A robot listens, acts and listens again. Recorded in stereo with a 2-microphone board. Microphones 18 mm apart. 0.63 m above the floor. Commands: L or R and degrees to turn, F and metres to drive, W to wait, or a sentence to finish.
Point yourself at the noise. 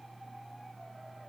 W
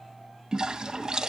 R35
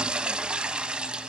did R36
R105
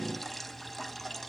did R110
Facing the toilet flushing, under 1 m away.